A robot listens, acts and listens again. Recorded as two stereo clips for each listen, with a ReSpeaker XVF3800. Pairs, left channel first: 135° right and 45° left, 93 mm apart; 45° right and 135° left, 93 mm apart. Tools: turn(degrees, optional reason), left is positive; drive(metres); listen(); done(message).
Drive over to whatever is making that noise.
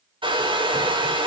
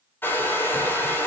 turn(degrees=20, reason="The hair dryer: 20° left.")
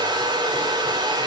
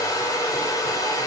drive(metres=1.0)
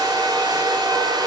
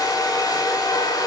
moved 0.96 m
drive(metres=1.0)
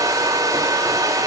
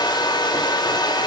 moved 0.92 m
drive(metres=1.0)
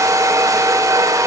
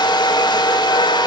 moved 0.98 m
turn(degrees=-10, reason="The hair dryer is now 10° right.")
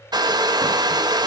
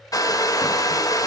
drive(metres=1.0)
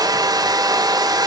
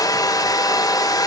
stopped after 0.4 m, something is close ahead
done("Arrived at the hair dryer, straight ahead.")